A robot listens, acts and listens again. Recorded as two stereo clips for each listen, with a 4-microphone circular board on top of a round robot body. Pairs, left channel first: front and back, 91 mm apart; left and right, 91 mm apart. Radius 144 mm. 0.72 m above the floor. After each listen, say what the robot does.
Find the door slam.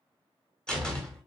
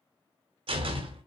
Turn 80° right.
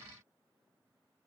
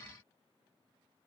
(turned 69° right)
Turn 15° right.
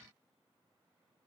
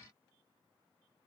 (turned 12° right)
Facing where the door slam came from. I can't hear it now.